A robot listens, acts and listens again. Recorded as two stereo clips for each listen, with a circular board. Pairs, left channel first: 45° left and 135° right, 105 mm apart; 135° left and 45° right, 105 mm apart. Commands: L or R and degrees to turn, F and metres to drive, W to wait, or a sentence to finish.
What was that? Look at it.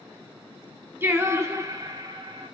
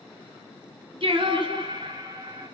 R95
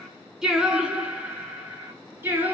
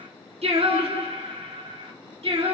R65
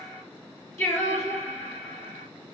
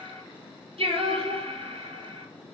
R20
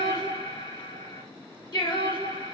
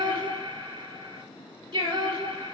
Facing the singing.